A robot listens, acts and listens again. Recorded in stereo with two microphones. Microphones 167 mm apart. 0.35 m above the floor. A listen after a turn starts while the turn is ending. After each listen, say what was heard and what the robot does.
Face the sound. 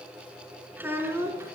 Turn 30° right.
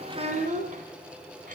So it is at 130° right. Turn 130° right.
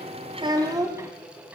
The child speaking is now 15° right. Turn 15° right.
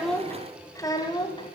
The child speaking is now 25° left. Turn 25° left.
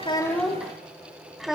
Found it: a child speaking, straight ahead, 1 to 2 m away.